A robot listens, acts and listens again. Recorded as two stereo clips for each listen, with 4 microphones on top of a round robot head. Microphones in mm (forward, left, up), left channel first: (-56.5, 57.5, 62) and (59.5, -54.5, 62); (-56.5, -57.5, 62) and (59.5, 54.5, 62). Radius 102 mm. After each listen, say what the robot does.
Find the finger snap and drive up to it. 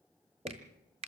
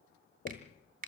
Turn 10° left.
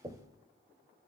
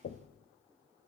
Keep listening.
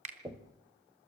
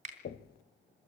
Drive 1.0 m forward.
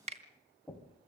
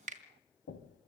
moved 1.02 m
Drive 1.0 m forward.
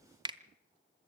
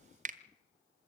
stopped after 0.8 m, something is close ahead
Turn 15° left.
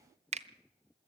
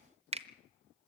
Arrived at the finger snap, straight ahead.